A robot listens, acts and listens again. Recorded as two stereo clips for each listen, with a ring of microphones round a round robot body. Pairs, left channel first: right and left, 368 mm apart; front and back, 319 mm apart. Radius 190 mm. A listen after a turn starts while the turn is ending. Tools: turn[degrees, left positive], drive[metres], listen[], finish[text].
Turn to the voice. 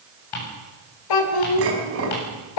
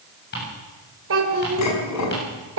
Thought: The child speaking: 120° right.
Action: turn[-120]
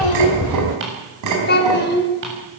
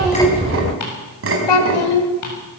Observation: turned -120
Thought: The child speaking is now 25° right.
Action: turn[-25]
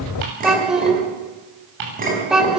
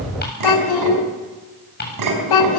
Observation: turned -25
Action: finish[Found it: a child speaking, straight ahead, 2 to 4 m away.]